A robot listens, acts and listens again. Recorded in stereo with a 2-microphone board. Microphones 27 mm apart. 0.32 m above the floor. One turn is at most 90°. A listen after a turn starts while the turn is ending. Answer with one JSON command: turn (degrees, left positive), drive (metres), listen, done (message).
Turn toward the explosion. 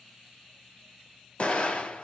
{"turn": 45}
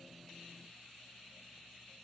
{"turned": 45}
{"listen": true}
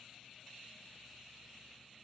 {"done": "I heard an explosion, but can't make it out now. It was about straight ahead or 90° left."}